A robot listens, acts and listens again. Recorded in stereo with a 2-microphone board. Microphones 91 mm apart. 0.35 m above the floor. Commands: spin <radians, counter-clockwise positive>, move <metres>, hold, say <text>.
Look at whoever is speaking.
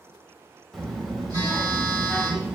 spin 0.52
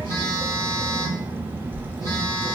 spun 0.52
spin -0.44
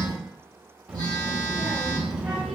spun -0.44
spin -0.17
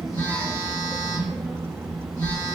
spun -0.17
say Facing the child speaking, under 1 m away.